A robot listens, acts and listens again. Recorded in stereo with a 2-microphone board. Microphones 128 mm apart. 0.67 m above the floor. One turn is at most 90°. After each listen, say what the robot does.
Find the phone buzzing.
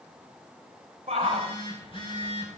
Turn 45° left.
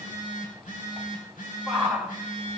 Turn 90° left.
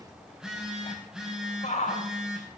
Facing the phone buzzing, over 4 m away.